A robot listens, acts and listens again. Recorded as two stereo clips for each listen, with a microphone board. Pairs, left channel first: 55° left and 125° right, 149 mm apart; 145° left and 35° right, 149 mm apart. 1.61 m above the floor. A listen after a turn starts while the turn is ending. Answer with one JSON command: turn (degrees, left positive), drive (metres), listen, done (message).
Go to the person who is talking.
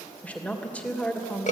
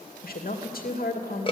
{"turn": 135}
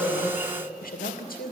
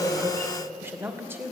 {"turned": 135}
{"turn": 40}
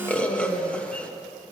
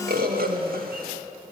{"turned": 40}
{"listen": true}
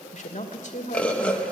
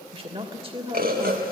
{"turn": 20}
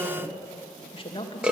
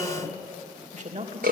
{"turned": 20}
{"drive": 1.0}
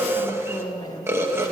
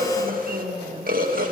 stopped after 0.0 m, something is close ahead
{"done": "Something is in my way. I am facing the woman speaking but have not reached it."}